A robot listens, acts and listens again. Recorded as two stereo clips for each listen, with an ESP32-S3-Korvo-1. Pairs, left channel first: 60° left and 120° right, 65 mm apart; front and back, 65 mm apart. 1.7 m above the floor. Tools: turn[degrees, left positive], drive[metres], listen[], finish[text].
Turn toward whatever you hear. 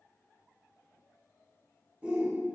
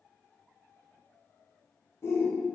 Thought: The shout: 50° right.
Action: turn[-50]
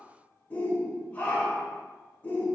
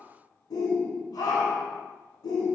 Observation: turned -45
Action: finish[Facing the shout.]